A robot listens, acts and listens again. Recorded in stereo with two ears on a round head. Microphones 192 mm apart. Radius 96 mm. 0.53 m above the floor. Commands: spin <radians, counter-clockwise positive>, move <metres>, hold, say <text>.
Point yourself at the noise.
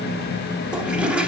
spin -0.52
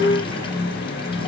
hold
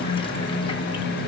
hold
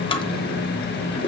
spin 0.44
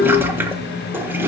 spin -0.17
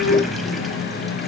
hold
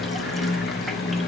hold
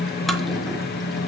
say Facing where the toilet flushing came from. I can't hear it now.